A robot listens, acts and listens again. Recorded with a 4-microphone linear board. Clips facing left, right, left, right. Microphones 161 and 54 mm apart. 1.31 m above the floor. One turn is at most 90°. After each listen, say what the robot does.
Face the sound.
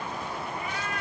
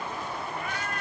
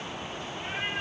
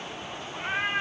Turn 55° right.
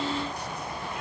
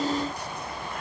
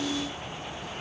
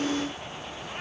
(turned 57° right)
Keep listening.
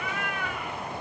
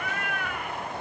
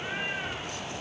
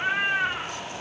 Turn 60° right.
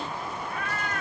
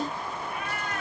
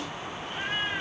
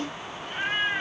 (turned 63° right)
Turn 20° right.
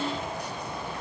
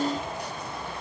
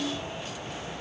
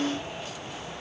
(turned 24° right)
Keep listening.
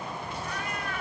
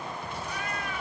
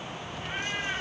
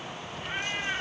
Facing the cat meowing, 2 to 4 m away.